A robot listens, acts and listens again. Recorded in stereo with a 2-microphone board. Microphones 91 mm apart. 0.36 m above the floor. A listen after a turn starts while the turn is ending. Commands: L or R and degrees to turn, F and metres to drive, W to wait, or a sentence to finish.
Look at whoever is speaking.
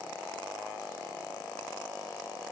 W
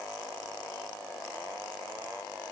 W
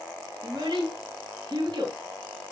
R60
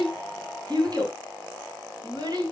R55
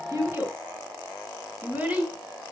R20
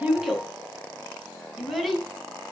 Found it: a child speaking, straight ahead.